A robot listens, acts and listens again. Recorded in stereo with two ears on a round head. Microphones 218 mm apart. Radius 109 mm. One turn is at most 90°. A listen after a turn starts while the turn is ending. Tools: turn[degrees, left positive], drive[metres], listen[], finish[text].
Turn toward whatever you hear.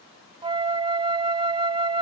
Thought: The flute: about 20° right or 160° right.
Action: turn[-20]
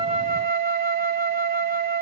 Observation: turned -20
Thought: So it is at 135° right.
Action: turn[-90]
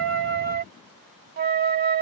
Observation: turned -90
Thought: The flute is now 45° right.
Action: turn[-45]
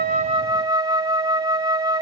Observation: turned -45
Thought: The flute is now 20° right.
Action: turn[-20]
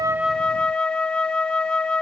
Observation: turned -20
Action: finish[Found it: a flute, straight ahead.]